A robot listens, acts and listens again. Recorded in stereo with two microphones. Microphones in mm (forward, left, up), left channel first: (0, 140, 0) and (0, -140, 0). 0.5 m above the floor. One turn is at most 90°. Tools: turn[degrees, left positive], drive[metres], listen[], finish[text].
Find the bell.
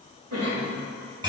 Action: listen[]
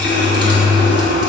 Action: listen[]
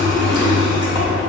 Action: finish[I can't make out a bell, only a cough and a running tap.]